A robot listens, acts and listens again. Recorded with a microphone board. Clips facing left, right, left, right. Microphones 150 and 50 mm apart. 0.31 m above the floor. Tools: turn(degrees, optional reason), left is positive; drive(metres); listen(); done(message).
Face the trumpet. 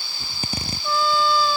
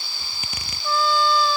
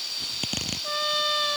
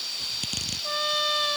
turn(degrees=30)
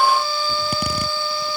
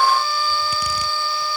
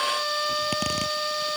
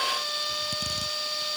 turn(degrees=150, reason="So it is at 150° left.")
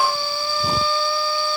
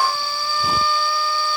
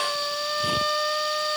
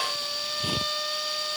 turn(degrees=30, reason="The trumpet is now 30° left.")
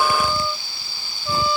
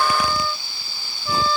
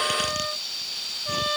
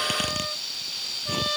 turn(degrees=15, reason="The trumpet is now 15° left.")
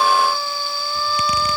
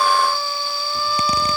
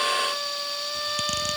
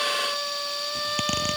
listen()
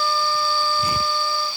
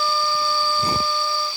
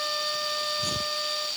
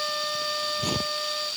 done("Facing the trumpet.")